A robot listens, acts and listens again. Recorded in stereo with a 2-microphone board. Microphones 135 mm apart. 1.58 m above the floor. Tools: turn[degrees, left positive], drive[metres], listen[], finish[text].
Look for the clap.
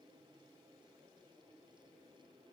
Action: listen[]
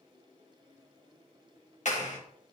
Thought: The clap: about 60° left or 120° left.
Action: turn[60]
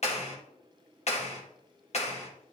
Thought: So it is at 55° left.
Action: turn[55]
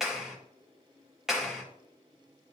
Action: finish[Found it: a clap, straight ahead, 1 to 2 m away.]